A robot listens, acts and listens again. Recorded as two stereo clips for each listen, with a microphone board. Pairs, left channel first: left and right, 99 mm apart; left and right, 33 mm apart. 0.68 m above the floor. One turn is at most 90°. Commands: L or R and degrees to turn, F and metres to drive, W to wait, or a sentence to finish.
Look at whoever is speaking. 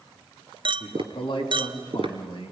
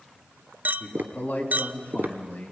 L50
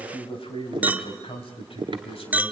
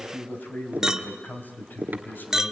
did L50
L80
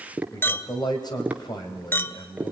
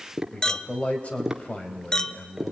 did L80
L45
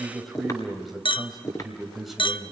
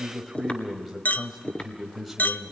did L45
Found it: a man speaking, straight ahead, 2 to 4 m away.